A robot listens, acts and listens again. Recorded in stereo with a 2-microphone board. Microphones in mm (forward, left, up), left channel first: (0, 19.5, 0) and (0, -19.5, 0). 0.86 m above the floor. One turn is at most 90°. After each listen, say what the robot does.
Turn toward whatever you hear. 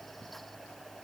Keep listening.
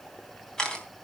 Turn 15° left.
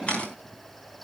Turn 90° left.
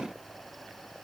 Turn 60° left.
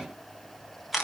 Found it: a camera shutter, straight ahead.